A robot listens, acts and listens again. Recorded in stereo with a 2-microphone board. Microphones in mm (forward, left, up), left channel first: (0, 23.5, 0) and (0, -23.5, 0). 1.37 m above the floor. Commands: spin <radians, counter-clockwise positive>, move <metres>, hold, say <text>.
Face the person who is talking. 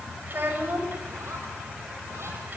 spin -0.70
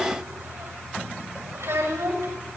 spin -1.75
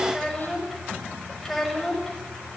say Found it: a child speaking, straight ahead, over 4 m away.